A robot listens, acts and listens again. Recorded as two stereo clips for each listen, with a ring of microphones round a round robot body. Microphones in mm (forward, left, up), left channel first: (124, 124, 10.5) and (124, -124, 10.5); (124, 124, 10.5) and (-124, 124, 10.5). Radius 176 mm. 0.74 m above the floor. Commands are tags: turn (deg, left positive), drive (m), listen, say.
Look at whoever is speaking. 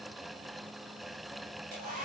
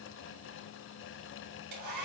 <listen/>
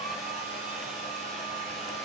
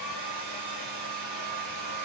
<listen/>
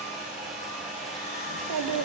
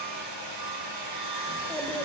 <turn deg="-90"/>
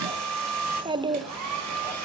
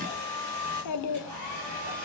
<turn deg="-15"/>
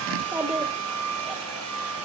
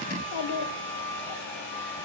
<say>Facing the child speaking, 1 to 2 m away.</say>